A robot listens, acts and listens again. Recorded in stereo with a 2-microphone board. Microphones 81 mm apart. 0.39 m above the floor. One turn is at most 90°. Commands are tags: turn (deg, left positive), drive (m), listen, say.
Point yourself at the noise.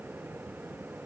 <listen/>
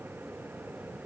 <listen/>
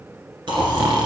<turn deg="-90"/>
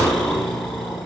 <say>Found it: snoring, straight ahead, 1 to 2 m away.</say>